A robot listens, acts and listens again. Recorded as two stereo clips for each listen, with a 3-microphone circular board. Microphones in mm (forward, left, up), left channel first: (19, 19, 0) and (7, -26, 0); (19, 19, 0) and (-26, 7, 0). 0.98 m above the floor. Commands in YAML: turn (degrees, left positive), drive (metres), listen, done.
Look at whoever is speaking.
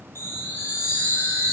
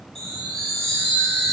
listen: true
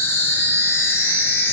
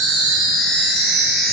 listen: true
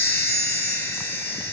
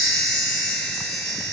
done: "I can't make out anyone speaking to turn to."